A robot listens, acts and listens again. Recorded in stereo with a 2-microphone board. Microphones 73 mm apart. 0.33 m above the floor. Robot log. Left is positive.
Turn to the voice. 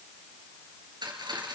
cmd idle
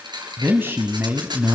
note: The man speaking: about 30° right or 150° right.
cmd yaw -30
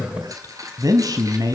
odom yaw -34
note: So it is at 115° right.
cmd yaw -115
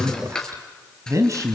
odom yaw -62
note: The man speaking is now 50° right.
cmd yaw -50
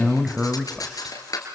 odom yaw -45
end: Found it: a man speaking, straight ahead, 1 to 2 m away.